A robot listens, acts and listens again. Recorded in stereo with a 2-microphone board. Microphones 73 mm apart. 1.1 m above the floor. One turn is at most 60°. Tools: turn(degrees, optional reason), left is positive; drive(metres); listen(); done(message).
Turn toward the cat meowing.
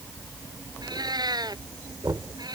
turn(degrees=-60, reason="The cat meowing: about 70° right or 110° right.")
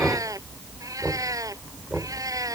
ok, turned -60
turn(degrees=-55, reason="So it is at 55° right.")
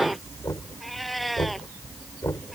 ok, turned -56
done("Facing the cat meowing.")